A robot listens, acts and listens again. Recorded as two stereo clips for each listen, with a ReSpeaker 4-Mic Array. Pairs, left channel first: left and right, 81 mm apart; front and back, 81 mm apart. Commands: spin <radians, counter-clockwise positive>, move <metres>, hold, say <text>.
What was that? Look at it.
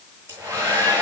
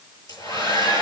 spin -0.52
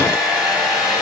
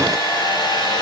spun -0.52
spin -0.17
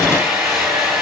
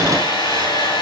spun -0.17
say Facing the hair dryer.